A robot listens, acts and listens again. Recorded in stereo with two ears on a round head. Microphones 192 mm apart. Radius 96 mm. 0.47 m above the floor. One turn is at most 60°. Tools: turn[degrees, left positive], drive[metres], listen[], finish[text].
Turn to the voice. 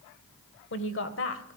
Thought: The woman speaking: about 60° left or 120° left.
Action: turn[60]
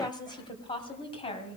Thought: So it is at 25° left.
Action: turn[25]
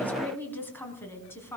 Thought: The woman speaking is now 10° left.
Action: turn[10]
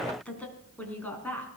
Thought: The woman speaking is now 10° left.
Action: turn[10]
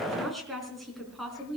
Action: finish[Facing the woman speaking.]